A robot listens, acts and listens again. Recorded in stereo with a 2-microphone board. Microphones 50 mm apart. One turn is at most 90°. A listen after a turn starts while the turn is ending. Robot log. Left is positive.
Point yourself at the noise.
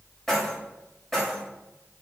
cmd yaw +30
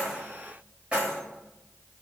note: So it is at 25° right.
cmd yaw -25
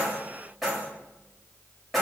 end: Facing the keys jangling.